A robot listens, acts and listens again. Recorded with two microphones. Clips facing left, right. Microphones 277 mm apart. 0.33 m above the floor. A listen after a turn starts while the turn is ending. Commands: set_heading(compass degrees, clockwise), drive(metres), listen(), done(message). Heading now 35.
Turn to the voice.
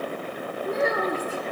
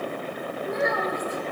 set_heading(0)
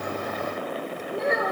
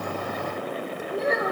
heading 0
done("Found it: a child speaking, straight ahead, over 4 m away.")